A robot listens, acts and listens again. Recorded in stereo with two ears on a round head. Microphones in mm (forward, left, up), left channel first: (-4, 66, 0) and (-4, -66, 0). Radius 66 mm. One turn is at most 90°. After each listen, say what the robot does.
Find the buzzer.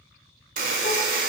Turn 60° right.
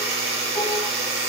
Turn 45° right.
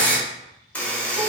Turn 10° left.
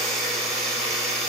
Facing the buzzer, 1 to 2 m away.